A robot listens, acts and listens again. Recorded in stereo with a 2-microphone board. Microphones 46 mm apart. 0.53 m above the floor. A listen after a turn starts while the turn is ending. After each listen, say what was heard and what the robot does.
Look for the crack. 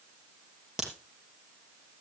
Turn 30° right.
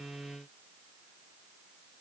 Keep listening.
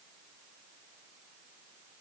I heard a crack, but can't make it out now. It was about 20° left or 140° right.